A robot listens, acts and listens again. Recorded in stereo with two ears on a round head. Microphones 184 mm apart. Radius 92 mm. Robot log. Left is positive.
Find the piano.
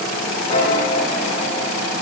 note: The piano: about 25° left or 155° left.
cmd yaw +25
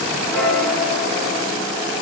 end: Facing the piano, over 4 m away.